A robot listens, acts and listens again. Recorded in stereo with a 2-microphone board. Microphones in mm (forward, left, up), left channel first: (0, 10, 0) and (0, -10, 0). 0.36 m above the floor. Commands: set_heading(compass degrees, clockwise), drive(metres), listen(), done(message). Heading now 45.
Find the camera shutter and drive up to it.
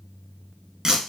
listen()
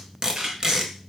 set_heading(95)
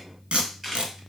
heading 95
drive(1.0)
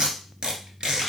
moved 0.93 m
listen()
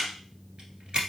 drive(1.0)
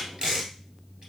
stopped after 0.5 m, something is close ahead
listen()
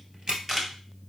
set_heading(105)
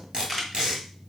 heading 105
done("Arrived at the camera shutter, straight ahead.")